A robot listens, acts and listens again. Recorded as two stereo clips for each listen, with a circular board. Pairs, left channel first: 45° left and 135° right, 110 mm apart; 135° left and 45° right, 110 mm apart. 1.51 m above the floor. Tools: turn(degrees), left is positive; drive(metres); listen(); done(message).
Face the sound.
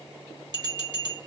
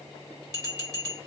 turn(degrees=-95)
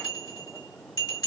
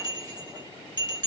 done("Facing the bell, 1 to 2 m away.")